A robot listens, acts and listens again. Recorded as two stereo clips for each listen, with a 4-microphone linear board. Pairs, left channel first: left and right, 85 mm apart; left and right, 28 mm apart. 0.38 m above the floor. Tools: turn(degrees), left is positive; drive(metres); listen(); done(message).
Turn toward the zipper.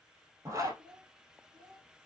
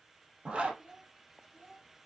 turn(degrees=-35)
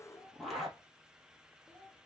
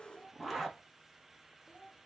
done("Found it: a zipper, straight ahead.")